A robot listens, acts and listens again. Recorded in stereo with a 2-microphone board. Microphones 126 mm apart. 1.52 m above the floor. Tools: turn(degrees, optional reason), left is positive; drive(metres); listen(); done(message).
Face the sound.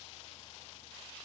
listen()
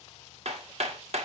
turn(degrees=-55, reason="The hammering: about 55° right or 125° right.")
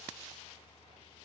listen()
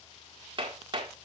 turn(degrees=-45, reason="So it is at 45° right.")
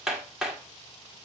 done("Found it: hammering, straight ahead.")